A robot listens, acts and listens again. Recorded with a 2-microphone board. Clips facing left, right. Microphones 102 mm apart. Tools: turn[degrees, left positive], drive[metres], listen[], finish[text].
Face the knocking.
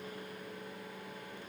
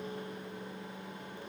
Action: listen[]
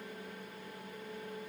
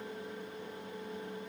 Action: listen[]
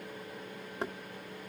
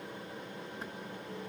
Thought: The knocking: about 65° left or 115° left.
Action: turn[65]
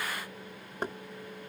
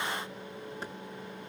Thought: So it is at 50° left.
Action: turn[50]
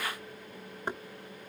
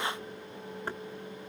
Thought: The knocking is now 20° left.
Action: turn[20]
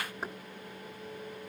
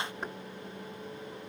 Action: finish[Facing the knocking.]